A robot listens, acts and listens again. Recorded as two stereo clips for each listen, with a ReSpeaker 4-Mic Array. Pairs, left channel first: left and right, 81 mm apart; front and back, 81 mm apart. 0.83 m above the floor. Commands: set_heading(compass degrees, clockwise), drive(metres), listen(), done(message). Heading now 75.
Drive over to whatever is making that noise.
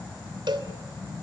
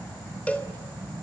set_heading(145)
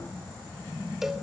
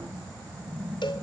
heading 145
drive(1.0)
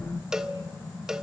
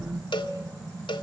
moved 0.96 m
drive(1.0)
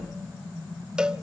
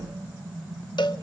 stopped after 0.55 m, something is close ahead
set_heading(155)
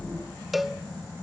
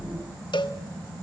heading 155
done("I am next to the cowbell.")